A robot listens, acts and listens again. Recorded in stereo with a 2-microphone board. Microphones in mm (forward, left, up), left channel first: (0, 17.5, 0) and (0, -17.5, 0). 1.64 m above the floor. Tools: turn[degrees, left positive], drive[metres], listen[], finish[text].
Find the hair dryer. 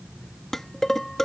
Action: listen[]
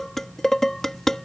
Action: listen[]
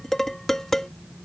Action: finish[I can't make out a hair dryer, only dishes clattering.]